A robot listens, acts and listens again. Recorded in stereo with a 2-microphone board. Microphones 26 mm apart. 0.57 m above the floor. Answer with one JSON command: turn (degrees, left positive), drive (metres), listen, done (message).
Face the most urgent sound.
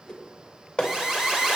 {"turn": -20}
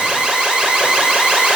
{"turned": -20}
{"turn": -140}
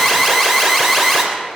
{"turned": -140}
{"done": "Found it: an alarm, straight ahead."}